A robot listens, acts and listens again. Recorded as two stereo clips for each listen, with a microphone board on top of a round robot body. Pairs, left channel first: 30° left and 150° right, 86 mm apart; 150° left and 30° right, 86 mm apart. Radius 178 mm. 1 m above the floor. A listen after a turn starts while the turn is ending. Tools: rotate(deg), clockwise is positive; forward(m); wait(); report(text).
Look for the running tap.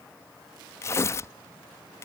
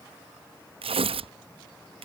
wait()
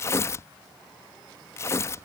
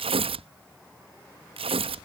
wait()
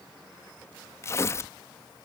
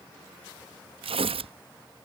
report("I can't make out a running tap to turn to.")